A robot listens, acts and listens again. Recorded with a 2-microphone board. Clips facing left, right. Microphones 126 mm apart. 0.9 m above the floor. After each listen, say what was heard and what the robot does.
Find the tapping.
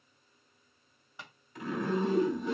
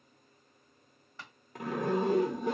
Turn 30° left.
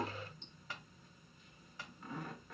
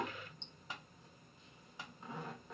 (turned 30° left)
So it is at 20° right. Turn 20° right.
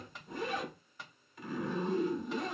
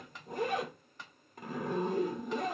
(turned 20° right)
Facing the tapping, 1 to 2 m away.